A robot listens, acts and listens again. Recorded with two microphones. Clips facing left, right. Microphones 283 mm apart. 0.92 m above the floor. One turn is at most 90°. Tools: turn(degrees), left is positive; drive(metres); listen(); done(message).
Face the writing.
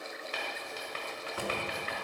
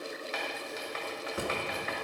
turn(degrees=40)
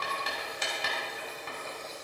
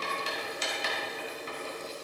turn(degrees=90)
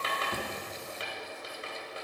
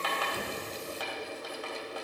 turn(degrees=30)
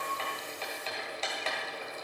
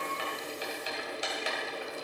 turn(degrees=-15)
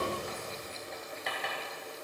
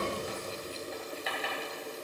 done("Facing the writing, 2 to 4 m away.")